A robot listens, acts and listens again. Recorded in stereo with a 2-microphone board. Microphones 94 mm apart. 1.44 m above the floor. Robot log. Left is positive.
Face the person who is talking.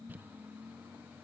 cmd idle
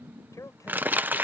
note: The man speaking: about 35° left or 145° left.
cmd yaw +35
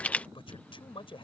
note: So it is at 115° left.
cmd yaw +115
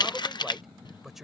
end: Facing the man speaking.